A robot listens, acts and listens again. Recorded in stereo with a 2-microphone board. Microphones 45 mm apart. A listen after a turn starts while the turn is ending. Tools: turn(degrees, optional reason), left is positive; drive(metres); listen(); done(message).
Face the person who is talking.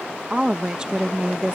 turn(degrees=-20, reason="The woman speaking: about 20° right or 160° right.")
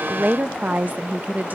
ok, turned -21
turn(degrees=-140, reason="So it is at 140° right.")
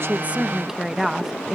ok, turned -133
turn(degrees=-10, reason="The woman speaking is now 10° right.")
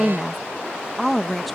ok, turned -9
done("Facing the woman speaking.")